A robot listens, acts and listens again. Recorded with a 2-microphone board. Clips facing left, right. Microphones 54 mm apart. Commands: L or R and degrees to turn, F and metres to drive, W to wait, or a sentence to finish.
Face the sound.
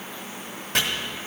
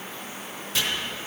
L55
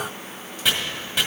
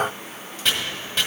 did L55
Found it: chopping, straight ahead.